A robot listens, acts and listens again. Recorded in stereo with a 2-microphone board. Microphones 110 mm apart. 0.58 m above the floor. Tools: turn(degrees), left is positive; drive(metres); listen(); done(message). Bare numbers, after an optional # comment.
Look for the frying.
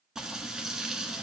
turn(-30)
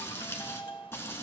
# So it is at 25° left.
turn(25)
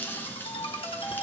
# The frying is now 20° left.
turn(20)
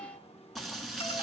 done("Found it: frying, straight ahead.")